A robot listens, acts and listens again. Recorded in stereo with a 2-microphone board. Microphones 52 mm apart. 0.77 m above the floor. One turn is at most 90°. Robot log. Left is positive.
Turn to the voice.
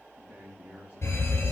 note: The man speaking: about 25° right or 155° right.
cmd yaw -25
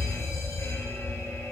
cmd idle
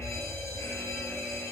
cmd idle
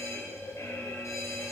end: I heard a man speaking, but can't make it out now. It was about straight ahead or 130° right.